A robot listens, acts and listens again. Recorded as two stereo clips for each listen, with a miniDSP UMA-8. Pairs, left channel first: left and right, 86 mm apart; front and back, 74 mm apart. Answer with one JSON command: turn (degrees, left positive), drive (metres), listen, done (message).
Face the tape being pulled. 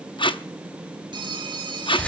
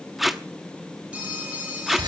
{"turn": 90}
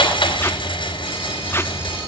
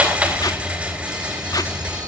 {"listen": true}
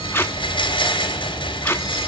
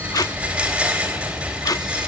{"turn": 30}
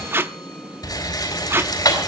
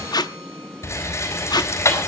{"turn": -25}
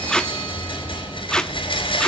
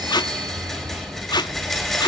{"turn": 10}
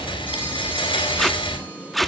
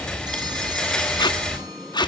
{"done": "Facing the tape being pulled."}